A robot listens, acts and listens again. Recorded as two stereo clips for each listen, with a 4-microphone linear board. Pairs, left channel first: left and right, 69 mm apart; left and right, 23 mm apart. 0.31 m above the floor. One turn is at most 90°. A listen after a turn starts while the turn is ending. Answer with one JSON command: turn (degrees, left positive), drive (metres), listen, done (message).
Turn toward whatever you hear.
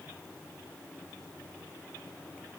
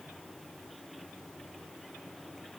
{"listen": true}
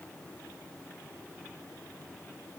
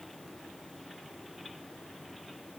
{"listen": true}
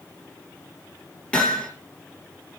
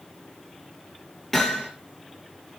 {"turn": 30}
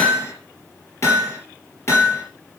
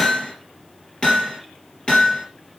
{"turn": 90}
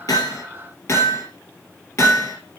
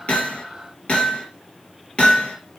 {"turn": 50}
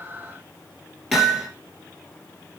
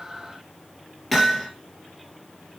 {"done": "Facing the hammering."}